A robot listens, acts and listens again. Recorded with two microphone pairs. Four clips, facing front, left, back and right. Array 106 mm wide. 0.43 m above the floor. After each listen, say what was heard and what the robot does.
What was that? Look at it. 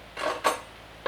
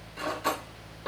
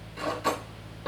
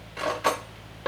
The cutlery clinking: 45° right. Turn 45° right.
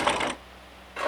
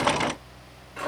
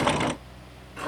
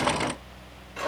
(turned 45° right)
Found it: cutlery clinking, straight ahead.